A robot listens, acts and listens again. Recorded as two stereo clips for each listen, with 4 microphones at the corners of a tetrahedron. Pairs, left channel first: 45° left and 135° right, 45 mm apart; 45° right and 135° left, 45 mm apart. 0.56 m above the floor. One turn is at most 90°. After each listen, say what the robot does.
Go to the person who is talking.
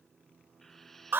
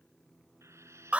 Keep listening.
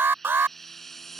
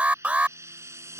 Keep listening.
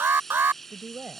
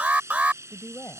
Turn 70° right.
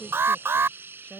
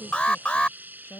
Turn 15° right.
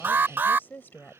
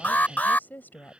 Drive 1.0 m forward.
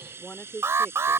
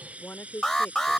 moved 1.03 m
Drive 1.0 m forward.
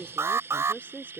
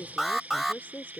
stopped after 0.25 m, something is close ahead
I am next to the woman speaking.